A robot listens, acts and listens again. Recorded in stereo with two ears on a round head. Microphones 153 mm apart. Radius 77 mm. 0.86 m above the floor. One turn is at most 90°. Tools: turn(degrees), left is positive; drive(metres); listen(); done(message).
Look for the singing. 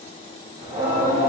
turn(degrees=-30)
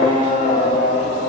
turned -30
turn(degrees=35)
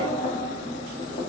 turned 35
turn(degrees=35)
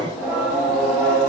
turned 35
done("Facing the singing, 2 to 4 m away.")